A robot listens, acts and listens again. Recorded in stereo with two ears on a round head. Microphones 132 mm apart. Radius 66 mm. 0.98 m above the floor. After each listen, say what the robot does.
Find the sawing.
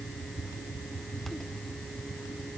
Keep listening.
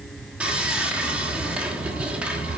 Turn 30° right.
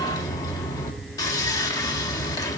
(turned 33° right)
Turn 25° left.
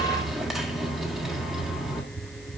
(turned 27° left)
Facing the sawing.